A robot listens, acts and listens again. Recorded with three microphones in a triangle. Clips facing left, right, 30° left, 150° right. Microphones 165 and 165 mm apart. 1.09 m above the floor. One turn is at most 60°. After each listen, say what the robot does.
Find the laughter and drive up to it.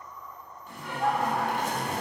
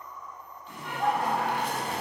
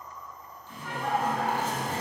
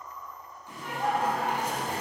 Turn 60° right.
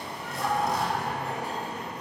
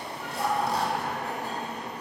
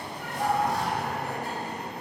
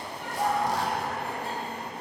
Turn 60° right.
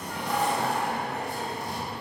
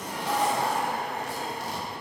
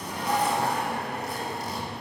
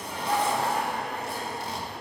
Turn 20° right.
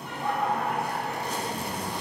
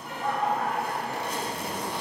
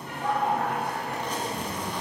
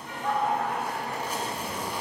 Drive 1.0 m forward.
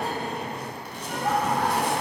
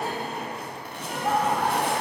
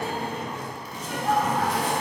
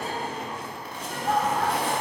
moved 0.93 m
Drive 1.0 m forward.
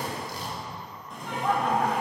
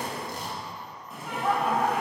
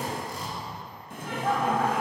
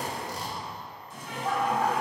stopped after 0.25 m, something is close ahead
Arrived at the laughter, straight ahead.